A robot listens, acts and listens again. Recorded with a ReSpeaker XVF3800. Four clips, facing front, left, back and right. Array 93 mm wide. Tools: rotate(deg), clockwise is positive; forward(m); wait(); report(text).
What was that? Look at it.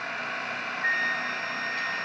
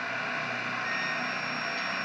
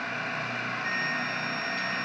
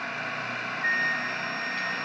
rotate(55)
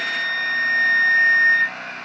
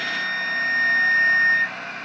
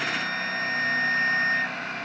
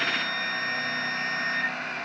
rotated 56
report("Found it: a flute, straight ahead.")